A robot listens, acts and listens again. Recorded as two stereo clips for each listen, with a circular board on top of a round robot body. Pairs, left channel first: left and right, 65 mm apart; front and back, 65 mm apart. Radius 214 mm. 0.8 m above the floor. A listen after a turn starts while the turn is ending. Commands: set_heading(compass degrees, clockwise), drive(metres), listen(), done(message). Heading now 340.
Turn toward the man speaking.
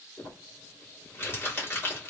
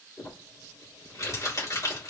listen()
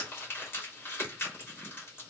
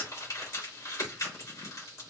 listen()
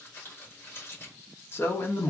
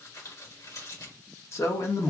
set_heading(305)
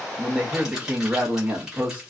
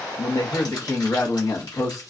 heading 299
set_heading(324)
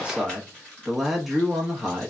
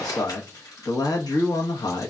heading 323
done("Facing the man speaking.")